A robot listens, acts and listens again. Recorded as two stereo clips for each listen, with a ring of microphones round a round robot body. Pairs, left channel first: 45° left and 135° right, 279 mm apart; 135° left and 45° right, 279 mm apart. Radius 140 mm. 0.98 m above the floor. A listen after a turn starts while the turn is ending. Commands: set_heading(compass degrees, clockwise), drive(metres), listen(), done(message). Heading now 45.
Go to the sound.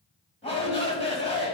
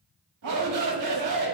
set_heading(70)
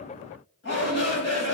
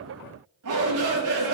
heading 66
drive(1.0)
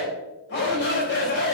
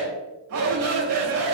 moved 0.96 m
set_heading(76)
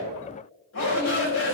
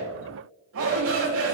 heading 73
drive(1.0)
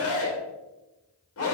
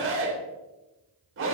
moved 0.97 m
drive(1.0)
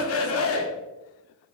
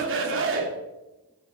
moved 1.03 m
drive(1.0)
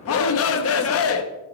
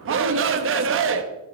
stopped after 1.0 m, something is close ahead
done("Arrived at the shout, straight ahead.")